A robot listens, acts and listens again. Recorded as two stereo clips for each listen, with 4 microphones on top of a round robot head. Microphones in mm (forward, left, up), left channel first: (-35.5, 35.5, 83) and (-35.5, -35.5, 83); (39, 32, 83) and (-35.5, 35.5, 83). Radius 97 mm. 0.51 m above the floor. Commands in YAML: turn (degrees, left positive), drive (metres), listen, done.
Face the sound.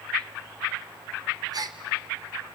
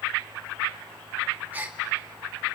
turn: -110
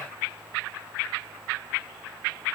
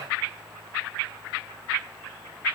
done: "Facing where the gasp came from. I can't hear it now."